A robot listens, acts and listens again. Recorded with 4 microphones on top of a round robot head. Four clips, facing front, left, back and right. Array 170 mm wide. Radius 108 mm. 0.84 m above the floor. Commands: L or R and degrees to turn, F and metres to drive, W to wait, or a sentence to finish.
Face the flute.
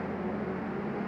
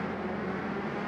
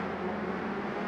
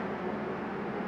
W
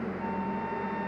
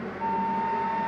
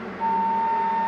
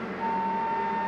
L175
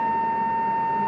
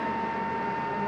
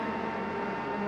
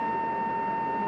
Facing the flute.